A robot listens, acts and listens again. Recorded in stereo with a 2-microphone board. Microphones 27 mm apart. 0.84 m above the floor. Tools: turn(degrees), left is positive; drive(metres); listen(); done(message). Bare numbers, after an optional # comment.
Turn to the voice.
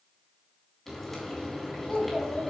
# The child speaking: about 50° left or 130° left.
turn(50)
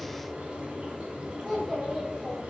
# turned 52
done("Facing the child speaking, 2 to 4 m away.")